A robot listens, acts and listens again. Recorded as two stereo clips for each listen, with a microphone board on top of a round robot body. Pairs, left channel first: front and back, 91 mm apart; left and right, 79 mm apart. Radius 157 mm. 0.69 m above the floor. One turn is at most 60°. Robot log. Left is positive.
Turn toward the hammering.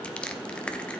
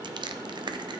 cmd idle
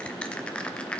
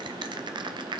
cmd idle
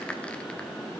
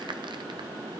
end: I can't make out hammering, only crushing.